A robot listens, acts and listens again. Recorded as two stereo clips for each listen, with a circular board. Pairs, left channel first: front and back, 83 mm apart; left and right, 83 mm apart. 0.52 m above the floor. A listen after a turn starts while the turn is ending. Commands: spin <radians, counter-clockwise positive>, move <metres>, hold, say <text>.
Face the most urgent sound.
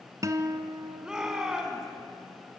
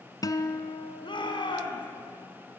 spin 1.66
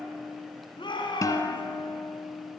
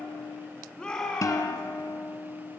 spin 0.17
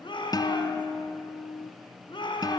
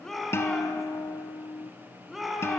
say Found it: a shout, straight ahead.